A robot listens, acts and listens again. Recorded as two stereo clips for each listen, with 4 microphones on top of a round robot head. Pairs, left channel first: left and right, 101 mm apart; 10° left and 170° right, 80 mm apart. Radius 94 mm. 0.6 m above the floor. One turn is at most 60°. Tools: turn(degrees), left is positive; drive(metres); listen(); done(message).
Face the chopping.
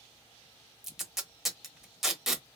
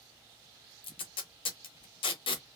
listen()
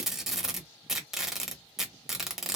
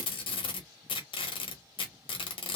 listen()
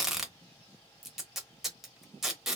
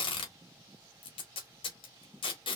done("I can't make out chopping, only tape being pulled.")